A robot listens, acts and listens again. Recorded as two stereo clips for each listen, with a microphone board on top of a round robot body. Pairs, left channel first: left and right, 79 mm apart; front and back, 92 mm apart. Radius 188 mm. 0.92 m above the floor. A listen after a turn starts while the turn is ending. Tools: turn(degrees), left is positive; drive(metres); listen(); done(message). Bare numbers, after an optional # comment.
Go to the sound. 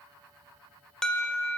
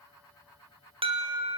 # The alarm: 170° left.
turn(170)
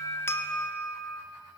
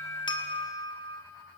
# The alarm is now 20° left.
turn(20)
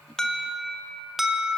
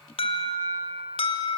drive(1.0)
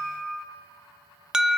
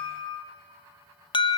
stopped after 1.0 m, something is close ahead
# The alarm is now 10° right.
turn(-10)
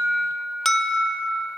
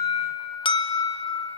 done("Arrived at the alarm, straight ahead.")